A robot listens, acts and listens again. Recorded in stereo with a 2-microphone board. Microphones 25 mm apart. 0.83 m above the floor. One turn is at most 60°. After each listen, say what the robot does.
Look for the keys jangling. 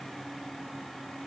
Keep listening.
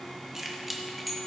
Turn 30° left.
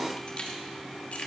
Turn 60° left.
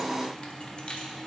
Turn 60° left.
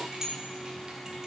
Turn 20° right.
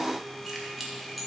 Facing the keys jangling, 2 to 4 m away.